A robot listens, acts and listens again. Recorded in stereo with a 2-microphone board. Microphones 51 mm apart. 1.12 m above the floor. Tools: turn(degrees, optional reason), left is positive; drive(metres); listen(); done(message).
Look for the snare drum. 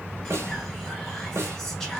turn(degrees=-60, reason="The snare drum: about 60° right or 120° right.")
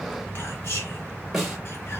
done("Found it: a snare drum, straight ahead, 1 to 2 m away.")